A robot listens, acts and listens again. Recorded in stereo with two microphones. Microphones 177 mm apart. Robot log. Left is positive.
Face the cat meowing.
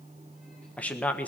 cmd idle
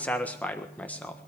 cmd idle
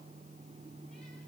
end: I can't make out a cat meowing to turn to.